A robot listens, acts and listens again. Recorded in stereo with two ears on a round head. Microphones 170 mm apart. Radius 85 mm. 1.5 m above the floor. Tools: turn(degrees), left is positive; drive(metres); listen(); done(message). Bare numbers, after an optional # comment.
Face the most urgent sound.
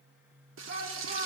# The shout: about 45° right or 135° right.
turn(-45)
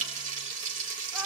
listen()
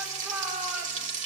done("Facing the shout, over 4 m away.")